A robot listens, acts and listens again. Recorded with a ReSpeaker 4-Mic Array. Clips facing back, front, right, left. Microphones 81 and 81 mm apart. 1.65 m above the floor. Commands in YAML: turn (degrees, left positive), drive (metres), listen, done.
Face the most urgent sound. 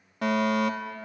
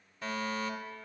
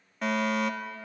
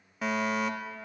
turn: 180
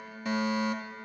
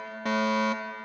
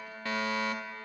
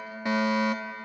turn: 20
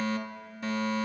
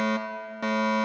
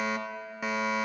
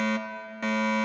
done: "Found it: a fire alarm, straight ahead."